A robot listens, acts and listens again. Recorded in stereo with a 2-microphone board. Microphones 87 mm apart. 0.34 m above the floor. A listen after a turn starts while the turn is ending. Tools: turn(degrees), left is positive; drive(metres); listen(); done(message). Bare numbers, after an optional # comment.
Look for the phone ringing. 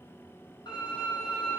listen()
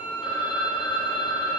# The phone ringing: about 65° left or 115° left.
turn(65)
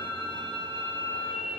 listen()
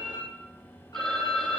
done("Facing the phone ringing, 1 to 2 m away.")